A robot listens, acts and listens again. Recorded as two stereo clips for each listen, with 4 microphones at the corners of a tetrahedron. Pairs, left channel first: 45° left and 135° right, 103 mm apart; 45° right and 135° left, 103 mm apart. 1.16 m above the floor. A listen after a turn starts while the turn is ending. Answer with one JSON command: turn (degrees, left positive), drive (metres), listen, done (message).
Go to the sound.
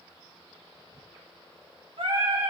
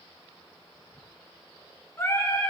{"turn": -110}
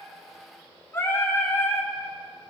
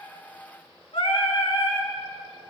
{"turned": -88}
{"turn": -20}
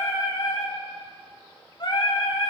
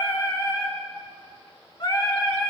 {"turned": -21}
{"drive": 1.0}
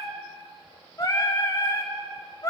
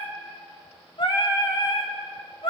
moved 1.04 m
{"drive": 1.0}
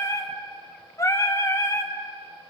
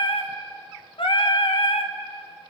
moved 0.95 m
{"turn": -15}
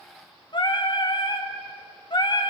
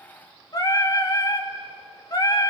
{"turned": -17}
{"drive": 1.0}
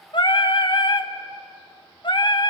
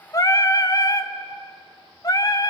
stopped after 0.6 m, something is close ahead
{"done": "Arrived at the singing, straight ahead."}